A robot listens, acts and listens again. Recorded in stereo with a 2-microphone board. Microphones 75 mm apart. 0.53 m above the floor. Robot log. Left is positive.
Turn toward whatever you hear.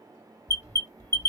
note: The alarm: about 40° left or 140° left.
cmd yaw +40
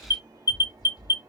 note: So it is at 95° left.
cmd yaw +95
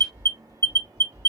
note: The alarm is now 45° left.
cmd yaw +45
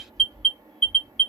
end: Found it: an alarm, straight ahead.